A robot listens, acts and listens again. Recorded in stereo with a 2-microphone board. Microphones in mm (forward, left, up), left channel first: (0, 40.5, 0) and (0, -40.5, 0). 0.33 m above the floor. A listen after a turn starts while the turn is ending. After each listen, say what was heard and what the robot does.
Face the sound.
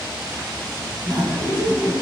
The laughter: about 55° right or 125° right. Turn 55° right.
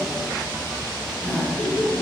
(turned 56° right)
Found it: laughter, straight ahead.